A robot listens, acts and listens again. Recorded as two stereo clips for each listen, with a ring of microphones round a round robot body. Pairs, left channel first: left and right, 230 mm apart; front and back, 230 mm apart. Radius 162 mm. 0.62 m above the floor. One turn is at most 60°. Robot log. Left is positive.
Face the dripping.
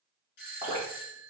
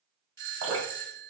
note: The dripping: 170° right.
cmd yaw -60
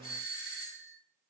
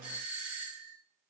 note: Nothing new. It was at 110° right.
cmd yaw -60
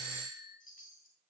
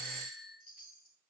note: Nothing new. It was at 50° right.
cmd yaw -50
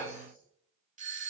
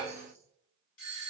end: I heard dripping from this way, but can't make it out now.